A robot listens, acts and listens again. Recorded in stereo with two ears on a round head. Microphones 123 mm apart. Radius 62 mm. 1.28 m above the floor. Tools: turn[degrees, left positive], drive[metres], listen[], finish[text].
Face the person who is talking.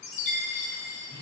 Action: listen[]
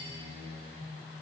Action: listen[]
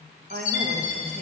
Thought: The woman speaking: about 50° right or 130° right.
Action: turn[-50]
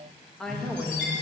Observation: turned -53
Action: finish[Facing the woman speaking, 1 to 2 m away.]